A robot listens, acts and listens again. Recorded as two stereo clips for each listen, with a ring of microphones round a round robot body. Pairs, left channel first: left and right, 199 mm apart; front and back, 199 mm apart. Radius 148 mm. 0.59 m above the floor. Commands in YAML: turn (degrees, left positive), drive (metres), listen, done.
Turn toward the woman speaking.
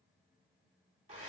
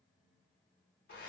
listen: true
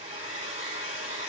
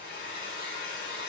listen: true
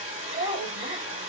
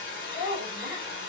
turn: -120
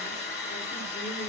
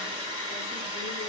listen: true
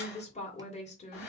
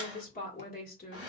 turn: 35
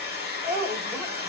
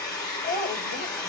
turn: -10
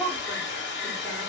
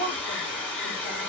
done: "Found it: a woman speaking, straight ahead, 1 to 2 m away."